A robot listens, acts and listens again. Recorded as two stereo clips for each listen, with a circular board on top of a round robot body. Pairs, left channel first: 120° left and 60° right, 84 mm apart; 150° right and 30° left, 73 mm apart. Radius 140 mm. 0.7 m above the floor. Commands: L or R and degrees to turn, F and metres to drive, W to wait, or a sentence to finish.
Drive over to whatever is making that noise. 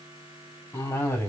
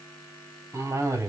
L60
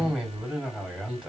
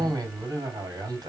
L20
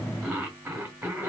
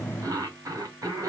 F1.0
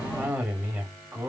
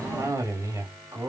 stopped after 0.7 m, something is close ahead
I am next to the cough.